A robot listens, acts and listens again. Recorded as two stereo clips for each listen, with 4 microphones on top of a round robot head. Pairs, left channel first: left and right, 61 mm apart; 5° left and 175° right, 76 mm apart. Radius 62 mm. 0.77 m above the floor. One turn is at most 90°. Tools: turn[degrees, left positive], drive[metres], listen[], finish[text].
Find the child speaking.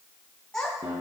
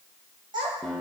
Thought: The child speaking: 170° left.
Action: turn[90]
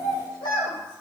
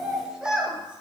Thought: The child speaking is now 105° left.
Action: turn[90]
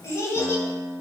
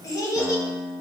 Thought: The child speaking is now 50° left.
Action: turn[50]
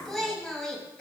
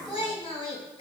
Thought: The child speaking is now 10° left.
Action: turn[10]
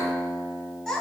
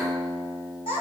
Thought: The child speaking is now 10° left.
Action: turn[10]
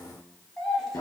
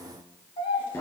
Action: finish[Found it: a child speaking, straight ahead.]